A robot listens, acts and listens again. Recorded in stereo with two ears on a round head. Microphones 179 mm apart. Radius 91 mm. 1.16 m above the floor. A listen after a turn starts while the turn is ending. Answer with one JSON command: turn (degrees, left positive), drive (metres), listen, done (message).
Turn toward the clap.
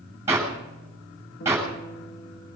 {"turn": -30}
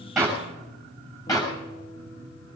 {"turn": 20}
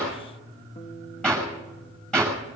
{"done": "Facing the clap."}